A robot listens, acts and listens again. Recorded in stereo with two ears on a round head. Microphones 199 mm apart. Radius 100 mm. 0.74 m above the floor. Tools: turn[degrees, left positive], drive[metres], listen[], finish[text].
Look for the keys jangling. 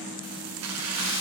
Thought: The keys jangling: about 75° right or 105° right.
Action: turn[-75]
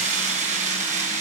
Thought: So it is at 35° right.
Action: turn[-35]
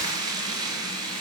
Thought: The keys jangling is now 20° right.
Action: turn[-20]
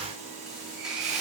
Action: listen[]
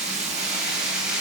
Action: finish[Facing the keys jangling, over 4 m away.]